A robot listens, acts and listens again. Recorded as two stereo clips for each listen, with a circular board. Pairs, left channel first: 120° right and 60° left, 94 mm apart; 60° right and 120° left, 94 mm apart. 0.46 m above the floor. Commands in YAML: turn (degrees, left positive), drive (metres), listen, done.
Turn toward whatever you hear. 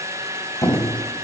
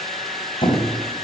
turn: -65
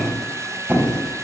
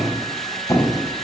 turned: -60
done: "Found it: a squeak, straight ahead, 2 to 4 m away."